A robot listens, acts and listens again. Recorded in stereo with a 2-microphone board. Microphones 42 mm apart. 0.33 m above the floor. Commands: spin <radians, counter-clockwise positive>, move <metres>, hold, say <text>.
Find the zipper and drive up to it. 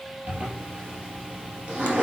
spin -0.44
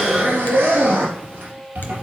spin -2.18
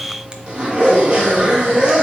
spin -0.44
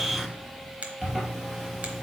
move 1.0
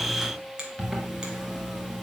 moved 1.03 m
move 1.0
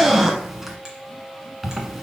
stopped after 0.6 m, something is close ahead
say I am next to the zipper.